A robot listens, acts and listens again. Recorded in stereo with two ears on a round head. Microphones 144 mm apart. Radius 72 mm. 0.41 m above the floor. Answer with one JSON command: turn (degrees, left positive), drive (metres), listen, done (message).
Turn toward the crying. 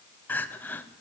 {"turn": 30}
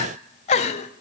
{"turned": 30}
{"turn": 135}
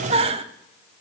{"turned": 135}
{"turn": -40}
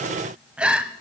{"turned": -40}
{"done": "Facing the crying."}